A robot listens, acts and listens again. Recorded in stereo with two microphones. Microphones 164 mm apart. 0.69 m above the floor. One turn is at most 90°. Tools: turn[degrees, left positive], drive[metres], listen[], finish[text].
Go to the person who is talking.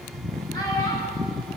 Action: listen[]
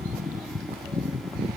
Action: listen[]
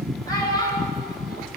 Thought: The child speaking: about 20° left or 160° left.
Action: turn[20]
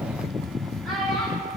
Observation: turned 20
Action: drive[1.0]
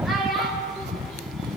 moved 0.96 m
Action: drive[1.0]
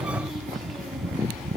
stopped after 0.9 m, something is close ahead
Action: listen[]
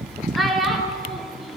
Action: finish[Arrived at the child speaking, straight ahead.]